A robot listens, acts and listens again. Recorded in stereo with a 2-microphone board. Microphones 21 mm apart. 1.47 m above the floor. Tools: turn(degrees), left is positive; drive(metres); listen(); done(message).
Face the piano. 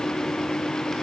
listen()
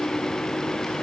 listen()
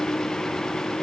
done("I can't make out a piano.")